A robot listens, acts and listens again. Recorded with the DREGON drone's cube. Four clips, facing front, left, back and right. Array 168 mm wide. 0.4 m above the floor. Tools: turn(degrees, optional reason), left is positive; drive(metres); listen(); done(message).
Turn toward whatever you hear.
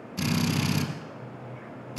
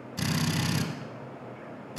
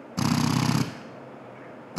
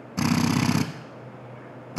turn(degrees=-135, reason="The drill: 135° right.")
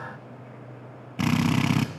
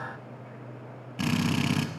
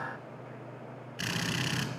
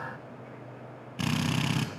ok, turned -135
done("Facing the drill.")